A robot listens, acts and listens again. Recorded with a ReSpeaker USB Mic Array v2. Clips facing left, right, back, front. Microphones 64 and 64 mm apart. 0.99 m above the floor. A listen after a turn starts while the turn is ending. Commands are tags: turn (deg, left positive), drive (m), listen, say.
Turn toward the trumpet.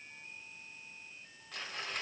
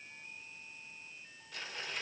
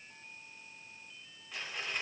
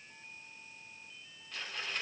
<listen/>
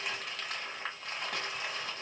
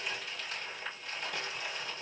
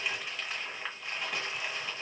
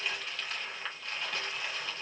<listen/>
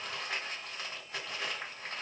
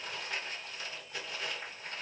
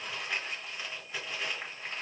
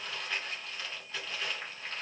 <say>I can't make out a trumpet to turn to.</say>